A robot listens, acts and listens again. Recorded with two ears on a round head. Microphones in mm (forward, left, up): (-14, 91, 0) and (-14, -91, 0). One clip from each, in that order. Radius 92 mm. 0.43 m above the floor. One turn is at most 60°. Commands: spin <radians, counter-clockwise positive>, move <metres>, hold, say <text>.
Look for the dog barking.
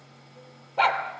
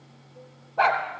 spin 1.05
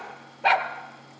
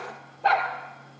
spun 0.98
spin 0.87
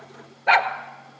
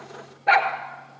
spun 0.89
spin 0.26
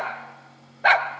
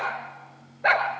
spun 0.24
spin 0.44
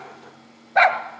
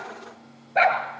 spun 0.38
spin 0.52
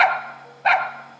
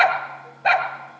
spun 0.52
say Found it: a dog barking, straight ahead, 1 to 2 m away.